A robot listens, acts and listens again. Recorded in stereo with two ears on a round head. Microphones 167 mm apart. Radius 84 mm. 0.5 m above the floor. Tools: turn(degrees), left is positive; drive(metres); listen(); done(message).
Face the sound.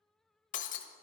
turn(degrees=40)
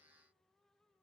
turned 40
listen()
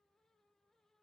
done("I heard breaking glass, but can't make it out now. It was about straight ahead or 100° left.")